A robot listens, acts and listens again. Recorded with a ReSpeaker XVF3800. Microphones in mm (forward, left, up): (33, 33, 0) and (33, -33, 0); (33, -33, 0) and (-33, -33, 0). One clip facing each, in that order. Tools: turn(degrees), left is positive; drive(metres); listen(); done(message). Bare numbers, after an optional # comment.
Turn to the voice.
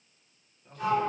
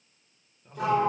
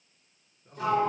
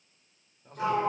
# The man speaking: 170° right.
turn(-170)
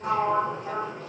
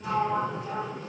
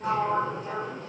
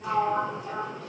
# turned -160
# Nothing new. It was at 10° right.
turn(-10)
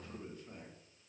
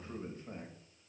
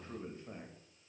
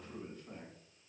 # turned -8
# The man speaking is now 55° right.
turn(-55)
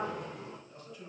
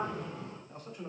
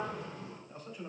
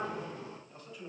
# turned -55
# The man speaking is now 50° right.
turn(-50)
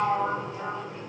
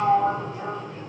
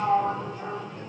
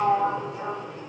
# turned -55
listen()
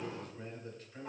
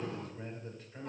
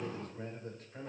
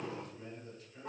done("Facing the man speaking, 1 to 2 m away.")